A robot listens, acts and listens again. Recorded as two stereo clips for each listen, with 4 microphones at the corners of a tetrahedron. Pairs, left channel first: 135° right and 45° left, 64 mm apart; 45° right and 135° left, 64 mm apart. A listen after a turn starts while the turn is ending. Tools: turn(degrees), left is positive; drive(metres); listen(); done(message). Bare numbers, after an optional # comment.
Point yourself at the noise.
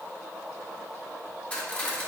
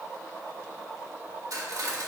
# The cutlery clinking: 160° left.
turn(160)
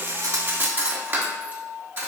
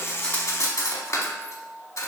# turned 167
# The cutlery clinking is now 10° right.
turn(-10)
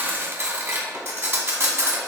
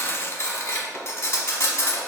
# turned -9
done("Facing the cutlery clinking.")